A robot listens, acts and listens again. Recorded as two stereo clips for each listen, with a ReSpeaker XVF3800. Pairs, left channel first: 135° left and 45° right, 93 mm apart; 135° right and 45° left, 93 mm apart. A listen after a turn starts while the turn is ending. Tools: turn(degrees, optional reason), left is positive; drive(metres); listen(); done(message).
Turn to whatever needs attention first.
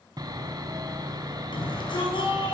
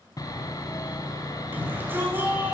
turn(degrees=115, reason="The shout: 115° left.")
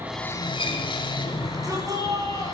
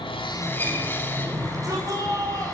done("Found it: a shout, straight ahead.")